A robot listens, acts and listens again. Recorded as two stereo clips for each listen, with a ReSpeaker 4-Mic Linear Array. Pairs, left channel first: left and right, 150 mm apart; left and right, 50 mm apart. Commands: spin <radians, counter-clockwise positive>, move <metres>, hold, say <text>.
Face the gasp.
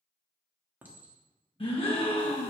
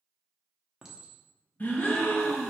spin 0.61
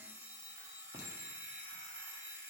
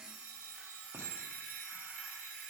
hold
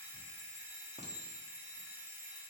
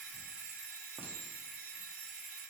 say I heard a gasp, but can't make it out now. It was about straight ahead or 110° left.